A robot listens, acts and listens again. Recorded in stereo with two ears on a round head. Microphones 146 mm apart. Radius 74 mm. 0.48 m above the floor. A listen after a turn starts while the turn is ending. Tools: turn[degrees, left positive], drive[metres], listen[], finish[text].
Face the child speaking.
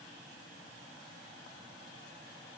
Action: listen[]
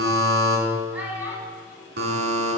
Action: turn[-30]
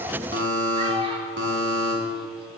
Action: listen[]
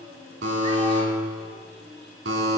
Action: listen[]
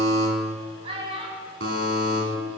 Thought: So it is at 145° right.
Action: turn[-145]
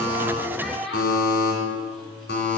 Action: finish[Facing the child speaking.]